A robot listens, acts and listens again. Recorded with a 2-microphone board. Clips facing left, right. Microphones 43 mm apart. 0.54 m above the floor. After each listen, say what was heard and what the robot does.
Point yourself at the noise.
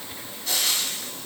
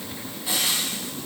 The frying: about 20° right or 160° right. Turn 20° right.
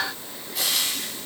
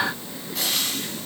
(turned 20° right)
Facing the frying.